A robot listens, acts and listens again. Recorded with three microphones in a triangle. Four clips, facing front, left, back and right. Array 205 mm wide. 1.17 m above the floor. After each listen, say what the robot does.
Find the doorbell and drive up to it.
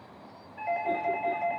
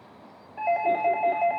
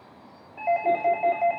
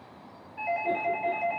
Turn 125° left.
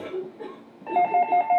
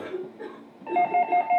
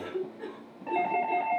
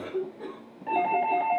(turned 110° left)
Turn 15° left.
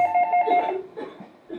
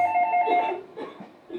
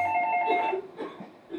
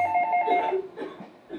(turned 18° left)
Drive 1.0 m forward.
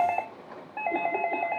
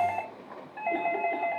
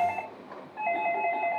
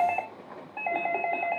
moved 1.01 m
Turn 15° right.
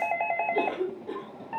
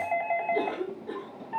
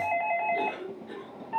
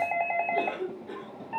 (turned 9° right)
Drive 1.0 m forward.
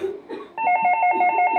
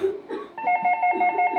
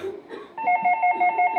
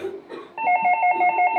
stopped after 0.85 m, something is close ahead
Turn 10° right.
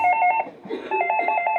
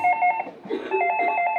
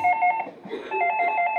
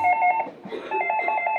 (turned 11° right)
I am next to the doorbell.